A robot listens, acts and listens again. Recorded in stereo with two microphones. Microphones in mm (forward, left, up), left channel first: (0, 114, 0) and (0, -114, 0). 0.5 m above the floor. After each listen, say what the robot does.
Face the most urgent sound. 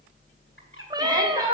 Turn 15° right.
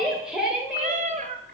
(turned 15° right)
Found it: a shout, straight ahead, 1 to 2 m away.